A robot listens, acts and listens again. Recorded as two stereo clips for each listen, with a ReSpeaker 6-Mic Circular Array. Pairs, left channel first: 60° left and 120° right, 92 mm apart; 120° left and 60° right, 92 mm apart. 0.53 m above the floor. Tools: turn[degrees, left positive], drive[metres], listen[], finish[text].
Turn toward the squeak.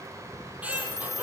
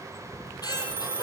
Thought: The squeak: 165° left.
Action: turn[165]
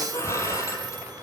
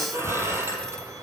Action: finish[Facing the squeak, over 4 m away.]